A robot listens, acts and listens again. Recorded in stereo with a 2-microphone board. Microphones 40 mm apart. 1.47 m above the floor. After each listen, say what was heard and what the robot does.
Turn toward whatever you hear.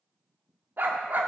The dog barking: about 55° right or 125° right. Turn 55° right.
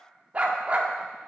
So it is at 45° right. Turn 45° right.
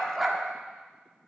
The dog barking is now 10° right. Turn 10° right.
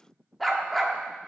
Facing the dog barking, 1 to 2 m away.